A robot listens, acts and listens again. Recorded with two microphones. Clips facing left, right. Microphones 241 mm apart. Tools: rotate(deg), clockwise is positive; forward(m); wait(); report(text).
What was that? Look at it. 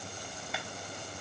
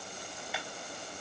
rotate(-30)
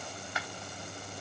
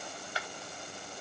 rotate(30)
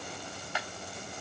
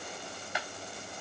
rotate(15)
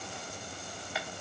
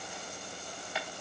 report("Found it: a clap, straight ahead, 2 to 4 m away.")